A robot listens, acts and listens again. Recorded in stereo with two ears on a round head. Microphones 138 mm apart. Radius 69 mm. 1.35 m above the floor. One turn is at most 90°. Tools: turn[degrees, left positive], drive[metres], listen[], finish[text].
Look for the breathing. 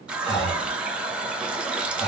Thought: The breathing: about 25° left or 155° left.
Action: turn[25]
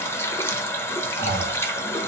Thought: So it is at 130° left.
Action: turn[90]
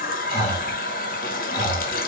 Thought: The breathing is now 40° left.
Action: turn[40]
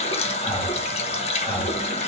Thought: The breathing is now 15° left.
Action: turn[15]
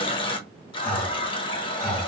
Action: finish[Found it: breathing, straight ahead, 2 to 4 m away.]